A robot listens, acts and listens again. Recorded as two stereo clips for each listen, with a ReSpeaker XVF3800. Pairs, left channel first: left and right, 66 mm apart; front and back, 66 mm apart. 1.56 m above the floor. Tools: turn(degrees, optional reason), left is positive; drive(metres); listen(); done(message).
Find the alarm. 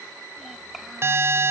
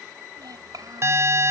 turn(degrees=-140, reason="The alarm: 140° right.")
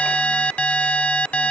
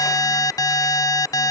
turn(degrees=20, reason="The alarm is now 20° left.")
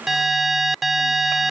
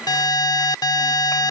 done("Facing the alarm.")